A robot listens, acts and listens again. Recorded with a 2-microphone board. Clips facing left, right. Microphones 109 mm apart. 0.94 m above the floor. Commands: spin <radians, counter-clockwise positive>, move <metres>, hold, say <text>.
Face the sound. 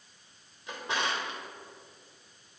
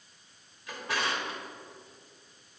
spin 0.44
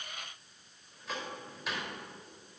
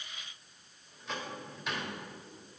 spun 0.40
say Found it: a drawer, straight ahead.